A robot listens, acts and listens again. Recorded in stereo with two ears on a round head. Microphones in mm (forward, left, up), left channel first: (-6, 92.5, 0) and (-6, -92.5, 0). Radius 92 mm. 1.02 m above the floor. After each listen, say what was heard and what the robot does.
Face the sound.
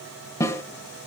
Turn 30° left.
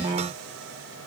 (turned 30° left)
Keep listening.
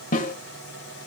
So it is at 135° left. Turn 135° left.
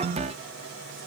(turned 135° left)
Keep listening.
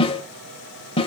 The snare drum is now 30° left. Turn 30° left.
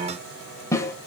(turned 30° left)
The snare drum is now 15° left. Turn 15° left.
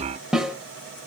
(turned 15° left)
Found it: a snare drum, straight ahead.